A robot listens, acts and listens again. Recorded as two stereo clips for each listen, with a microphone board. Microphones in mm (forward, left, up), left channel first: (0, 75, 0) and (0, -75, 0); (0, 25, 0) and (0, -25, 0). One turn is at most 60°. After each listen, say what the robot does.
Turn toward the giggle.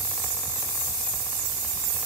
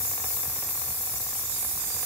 Keep listening.
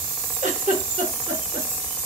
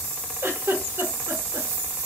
Turn 55° right.
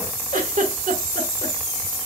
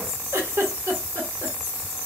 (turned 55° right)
Turn 60° right.
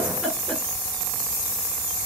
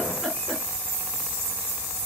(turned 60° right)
Keep listening.
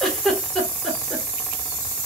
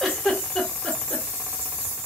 Facing the giggle.